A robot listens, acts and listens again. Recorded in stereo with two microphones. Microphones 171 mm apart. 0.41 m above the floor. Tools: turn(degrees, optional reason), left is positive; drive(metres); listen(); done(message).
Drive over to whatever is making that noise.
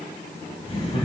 turn(degrees=35, reason="The laughter: about 35° left or 145° left.")
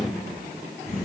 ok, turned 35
turn(degrees=110, reason="So it is at 110° left.")
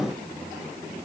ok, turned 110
listen()
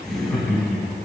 drive(metres=1.0)
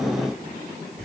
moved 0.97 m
drive(metres=1.0)
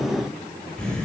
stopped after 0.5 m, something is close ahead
turn(degrees=10, reason="The laughter is now 10° left.")
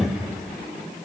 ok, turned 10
done("Arrived at the laughter, straight ahead.")